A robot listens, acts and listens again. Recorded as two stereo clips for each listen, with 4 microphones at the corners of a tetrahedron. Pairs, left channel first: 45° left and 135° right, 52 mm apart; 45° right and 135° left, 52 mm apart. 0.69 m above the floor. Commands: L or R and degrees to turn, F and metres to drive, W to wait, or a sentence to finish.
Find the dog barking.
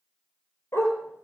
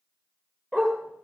L30
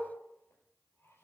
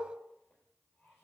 W
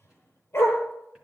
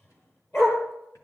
Found it: a dog barking, straight ahead, over 4 m away.